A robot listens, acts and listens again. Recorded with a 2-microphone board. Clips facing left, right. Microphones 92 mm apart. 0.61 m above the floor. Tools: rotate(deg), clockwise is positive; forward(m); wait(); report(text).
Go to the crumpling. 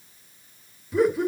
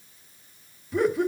wait()
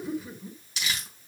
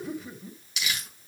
rotate(-40)
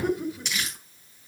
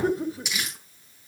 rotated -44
forward(1.0)
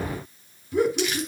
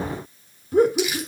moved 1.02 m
forward(1.0)
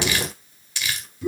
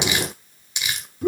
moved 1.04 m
rotate(20)
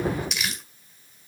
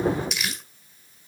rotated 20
forward(1.0)
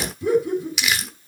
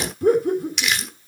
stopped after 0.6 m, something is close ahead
report("Arrived at the crumpling, straight ahead.")